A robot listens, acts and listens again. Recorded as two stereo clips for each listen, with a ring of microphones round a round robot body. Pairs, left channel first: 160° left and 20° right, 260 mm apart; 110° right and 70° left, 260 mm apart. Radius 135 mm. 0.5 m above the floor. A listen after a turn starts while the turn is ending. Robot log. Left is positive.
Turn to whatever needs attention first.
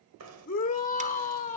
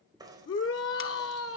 note: The shout: 145° right.
cmd yaw -145
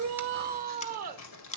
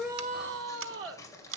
note: The shout is now 30° left.
cmd yaw +30
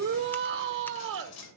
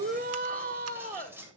note: The shout is now 10° left.
cmd yaw +10
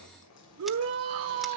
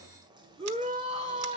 end: Facing the shout.